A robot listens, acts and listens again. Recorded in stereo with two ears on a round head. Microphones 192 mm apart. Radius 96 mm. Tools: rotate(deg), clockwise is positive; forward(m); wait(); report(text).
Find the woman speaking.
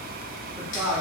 rotate(25)
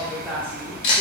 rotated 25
rotate(10)
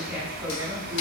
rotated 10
rotate(15)
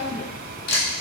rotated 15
report("Found it: a woman speaking, straight ahead.")